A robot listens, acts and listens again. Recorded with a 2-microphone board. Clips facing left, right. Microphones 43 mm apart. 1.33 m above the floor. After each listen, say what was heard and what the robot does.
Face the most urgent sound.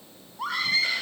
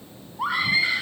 The scream: about 15° right or 165° right. Turn 15° right.
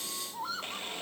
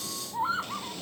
So it is at 150° right. Turn 150° right.
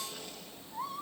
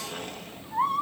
The scream is now 55° right. Turn 55° right.
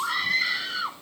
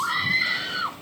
Found it: a scream, straight ahead.